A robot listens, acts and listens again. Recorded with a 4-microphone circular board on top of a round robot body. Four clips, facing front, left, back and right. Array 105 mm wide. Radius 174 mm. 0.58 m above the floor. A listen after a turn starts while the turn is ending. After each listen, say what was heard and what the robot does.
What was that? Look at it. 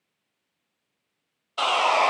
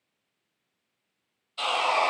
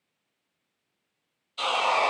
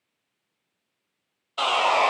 The sawing: 40° right. Turn 40° right.
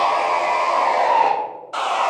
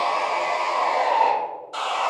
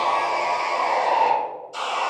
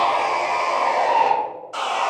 Found it: sawing, straight ahead, under 1 m away.